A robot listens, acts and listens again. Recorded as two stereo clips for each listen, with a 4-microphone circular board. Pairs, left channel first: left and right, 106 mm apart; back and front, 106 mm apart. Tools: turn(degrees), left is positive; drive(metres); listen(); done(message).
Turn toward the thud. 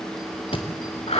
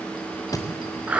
turn(degrees=125)
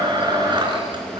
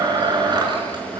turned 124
done("I heard a thud from this way, but can't make it out now.")